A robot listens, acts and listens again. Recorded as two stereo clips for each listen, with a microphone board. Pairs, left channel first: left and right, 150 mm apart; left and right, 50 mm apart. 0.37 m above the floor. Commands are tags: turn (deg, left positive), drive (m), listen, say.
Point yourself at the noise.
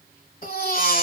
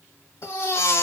<turn deg="65"/>
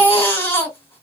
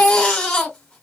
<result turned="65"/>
<turn deg="15"/>
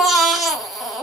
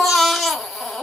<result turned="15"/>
<say>Found it: a baby crying, straight ahead.</say>